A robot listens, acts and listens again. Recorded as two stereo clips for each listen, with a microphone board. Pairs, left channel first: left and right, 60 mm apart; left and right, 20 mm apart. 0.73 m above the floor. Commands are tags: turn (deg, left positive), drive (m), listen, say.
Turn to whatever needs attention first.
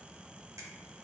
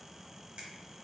<listen/>
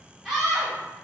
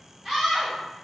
<turn deg="30"/>
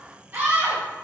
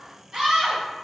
<turn deg="-30"/>
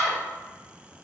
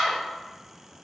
<turn deg="10"/>
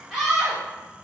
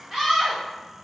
<say>Facing the scream.</say>